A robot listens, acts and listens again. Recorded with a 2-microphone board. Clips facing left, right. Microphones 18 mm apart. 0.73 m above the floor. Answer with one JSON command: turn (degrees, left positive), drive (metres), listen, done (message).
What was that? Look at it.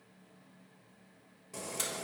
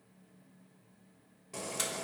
{"turn": -30}
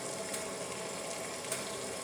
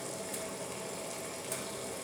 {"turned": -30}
{"turn": 15}
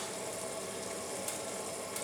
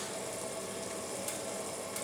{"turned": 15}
{"done": "Facing the boiling."}